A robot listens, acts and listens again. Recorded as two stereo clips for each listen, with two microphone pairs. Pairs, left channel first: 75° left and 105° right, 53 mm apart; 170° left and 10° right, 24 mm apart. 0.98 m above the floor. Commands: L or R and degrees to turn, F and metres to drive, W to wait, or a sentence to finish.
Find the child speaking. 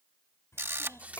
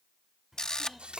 L65
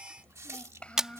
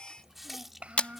L10
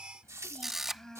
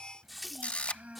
Found it: a child speaking, straight ahead.